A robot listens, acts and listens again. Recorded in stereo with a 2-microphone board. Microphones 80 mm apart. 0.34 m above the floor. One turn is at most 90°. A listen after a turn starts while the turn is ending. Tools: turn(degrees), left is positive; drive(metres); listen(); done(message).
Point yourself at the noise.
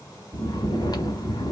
turn(degrees=55)
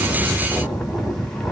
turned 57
done("Found it: snoring, straight ahead, under 1 m away.")